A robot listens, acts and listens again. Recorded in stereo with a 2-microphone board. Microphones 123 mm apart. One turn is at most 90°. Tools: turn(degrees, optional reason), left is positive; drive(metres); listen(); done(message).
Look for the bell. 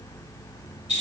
listen()
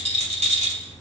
listen()
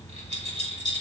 done("I can't make out a bell, only a rattle.")